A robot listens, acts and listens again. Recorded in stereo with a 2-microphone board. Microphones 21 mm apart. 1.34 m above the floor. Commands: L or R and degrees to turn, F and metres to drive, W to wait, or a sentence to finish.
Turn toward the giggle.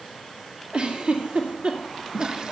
R90
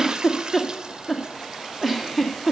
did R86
Facing the giggle, 2 to 4 m away.